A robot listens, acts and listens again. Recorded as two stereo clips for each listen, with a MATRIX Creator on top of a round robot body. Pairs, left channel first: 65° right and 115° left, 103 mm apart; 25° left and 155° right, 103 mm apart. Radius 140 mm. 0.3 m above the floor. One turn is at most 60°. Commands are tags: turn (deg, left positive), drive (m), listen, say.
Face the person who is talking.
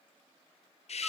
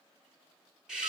<listen/>
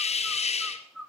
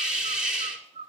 <listen/>
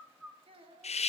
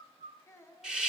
<turn deg="60"/>
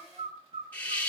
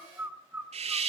<turn deg="25"/>
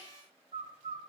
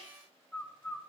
<listen/>
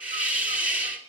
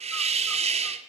<say>I heard a child speaking from this way, but can't make it out now.</say>